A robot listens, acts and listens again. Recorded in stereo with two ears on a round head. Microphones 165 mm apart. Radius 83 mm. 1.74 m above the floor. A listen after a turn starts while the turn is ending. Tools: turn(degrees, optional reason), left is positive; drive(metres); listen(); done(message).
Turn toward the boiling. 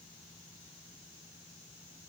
listen()
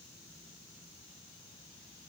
listen()
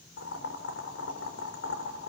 turn(degrees=90)
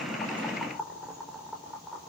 done("Facing the boiling, over 4 m away.")